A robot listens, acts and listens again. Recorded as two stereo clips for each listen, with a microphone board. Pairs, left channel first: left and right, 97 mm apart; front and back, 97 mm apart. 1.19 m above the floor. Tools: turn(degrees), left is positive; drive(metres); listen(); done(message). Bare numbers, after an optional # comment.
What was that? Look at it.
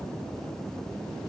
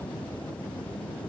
listen()
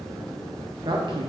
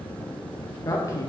# The woman speaking: 60° right.
turn(-60)
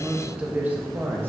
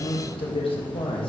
# The woman speaking is now 25° right.
turn(-25)
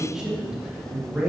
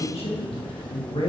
# The woman speaking is now 15° right.
turn(-15)
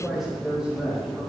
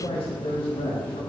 done("Found it: a woman speaking, straight ahead, 2 to 4 m away.")